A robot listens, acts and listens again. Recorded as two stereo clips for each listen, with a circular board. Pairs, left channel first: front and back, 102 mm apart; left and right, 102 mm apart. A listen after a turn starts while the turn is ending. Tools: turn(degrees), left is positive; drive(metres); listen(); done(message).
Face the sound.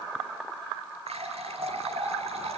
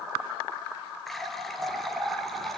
turn(degrees=180)
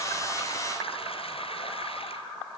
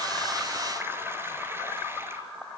listen()
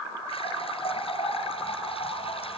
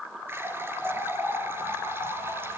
turn(degrees=-20)
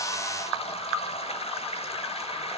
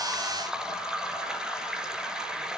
done("Found it: a running tap, straight ahead, over 4 m away.")